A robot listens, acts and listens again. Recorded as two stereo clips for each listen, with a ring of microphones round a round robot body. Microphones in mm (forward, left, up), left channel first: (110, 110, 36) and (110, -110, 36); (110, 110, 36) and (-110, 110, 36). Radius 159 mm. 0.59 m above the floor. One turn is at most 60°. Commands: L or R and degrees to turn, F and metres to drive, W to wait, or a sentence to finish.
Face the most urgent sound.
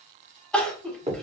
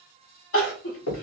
Found it: crying, straight ahead, 1 to 2 m away.